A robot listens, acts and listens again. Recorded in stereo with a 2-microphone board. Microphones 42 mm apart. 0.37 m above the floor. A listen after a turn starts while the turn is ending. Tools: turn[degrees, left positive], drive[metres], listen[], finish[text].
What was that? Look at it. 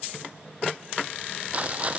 Thought: The rattle: about 35° right or 145° right.
Action: turn[-35]
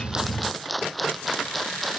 Action: finish[Facing the rattle.]